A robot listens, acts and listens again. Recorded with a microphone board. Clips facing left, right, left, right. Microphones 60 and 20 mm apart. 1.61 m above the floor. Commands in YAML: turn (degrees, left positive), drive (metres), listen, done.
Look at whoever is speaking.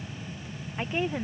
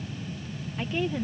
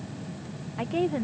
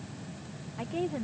turn: 25
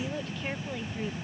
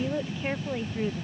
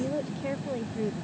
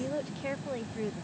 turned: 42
turn: -15
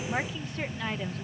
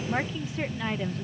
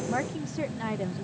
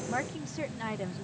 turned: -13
done: "Found it: a woman speaking, straight ahead."